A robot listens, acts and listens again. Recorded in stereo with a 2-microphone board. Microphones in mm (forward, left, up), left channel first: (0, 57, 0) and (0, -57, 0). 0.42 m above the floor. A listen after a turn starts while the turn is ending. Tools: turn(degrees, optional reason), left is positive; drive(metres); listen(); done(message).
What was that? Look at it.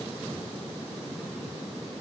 listen()
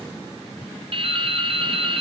turn(degrees=-50, reason="The dripping: about 50° right or 130° right.")
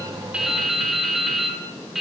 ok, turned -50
done("Facing the dripping, 2 to 4 m away.")